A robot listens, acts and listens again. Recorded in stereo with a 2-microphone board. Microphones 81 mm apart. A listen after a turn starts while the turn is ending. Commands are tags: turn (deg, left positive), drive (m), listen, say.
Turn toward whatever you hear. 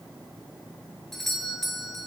<turn deg="30"/>
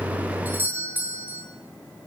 <turn deg="-25"/>
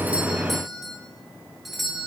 <say>Found it: a doorbell, straight ahead.</say>